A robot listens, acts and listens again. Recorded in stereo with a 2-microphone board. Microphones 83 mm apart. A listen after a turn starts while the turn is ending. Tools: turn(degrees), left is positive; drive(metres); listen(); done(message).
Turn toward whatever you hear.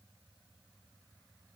listen()
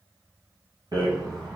turn(degrees=-60)
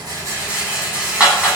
turn(degrees=-20)
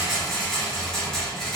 done("Facing the rattle.")